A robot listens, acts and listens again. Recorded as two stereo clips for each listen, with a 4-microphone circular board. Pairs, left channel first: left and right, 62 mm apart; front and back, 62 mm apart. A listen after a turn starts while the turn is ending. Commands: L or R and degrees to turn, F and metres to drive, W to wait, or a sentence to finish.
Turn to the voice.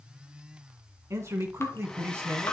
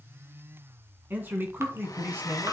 R130
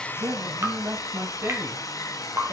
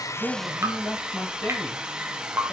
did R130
R50
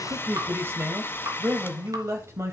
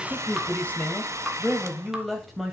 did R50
R95
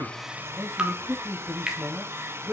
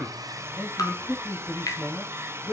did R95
R10
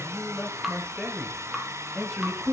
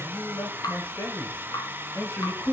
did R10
Found it: a man speaking, straight ahead, 1 to 2 m away.